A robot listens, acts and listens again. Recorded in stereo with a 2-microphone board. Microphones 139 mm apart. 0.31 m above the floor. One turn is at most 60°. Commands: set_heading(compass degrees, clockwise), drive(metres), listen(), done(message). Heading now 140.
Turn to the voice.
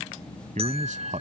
set_heading(200)
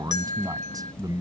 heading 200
set_heading(230)
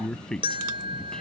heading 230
done("Found it: a man speaking, straight ahead.")